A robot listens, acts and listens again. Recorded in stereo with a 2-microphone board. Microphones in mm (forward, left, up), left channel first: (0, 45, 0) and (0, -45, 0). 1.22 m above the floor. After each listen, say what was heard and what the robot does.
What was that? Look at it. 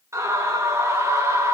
The scream: about 35° right or 145° right. Turn 35° right.
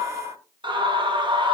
So it is at 110° right. Turn 110° right.
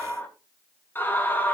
The scream is now 25° left. Turn 25° left.
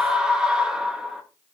The scream is now 10° right. Turn 10° right.
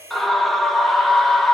Facing the scream, 2 to 4 m away.